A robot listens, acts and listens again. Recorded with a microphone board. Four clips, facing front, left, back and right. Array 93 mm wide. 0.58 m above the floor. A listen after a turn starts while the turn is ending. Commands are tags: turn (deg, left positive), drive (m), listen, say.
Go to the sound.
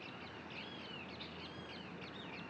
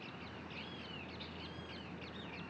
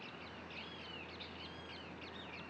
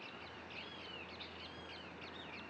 <listen/>
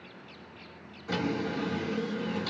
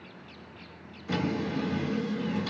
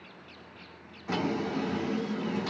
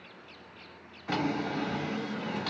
<turn deg="-115"/>
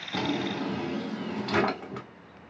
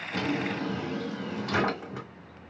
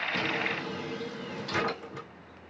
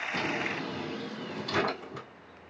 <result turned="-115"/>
<turn deg="30"/>
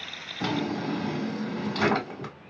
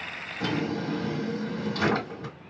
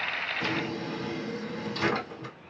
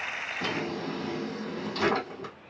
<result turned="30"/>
<drive m="1.0"/>
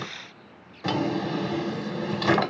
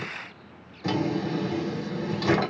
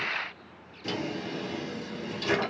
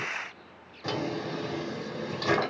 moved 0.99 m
<drive m="1.0"/>
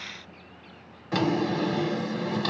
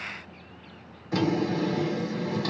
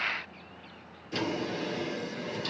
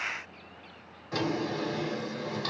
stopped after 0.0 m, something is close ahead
<say>I am next to the drawer.</say>